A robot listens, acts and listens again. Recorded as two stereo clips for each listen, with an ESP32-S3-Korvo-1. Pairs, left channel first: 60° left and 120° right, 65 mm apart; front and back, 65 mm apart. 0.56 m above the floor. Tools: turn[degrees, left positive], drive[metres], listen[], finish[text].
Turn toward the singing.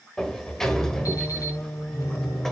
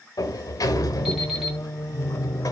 Thought: The singing: 45° left.
Action: turn[45]
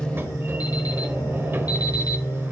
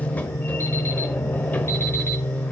Thought: The singing is now 60° left.
Action: turn[60]
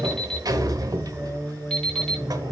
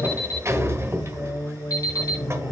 Thought: The singing is now 10° left.
Action: turn[10]
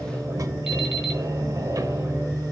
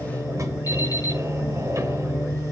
Action: finish[Found it: singing, straight ahead, 2 to 4 m away.]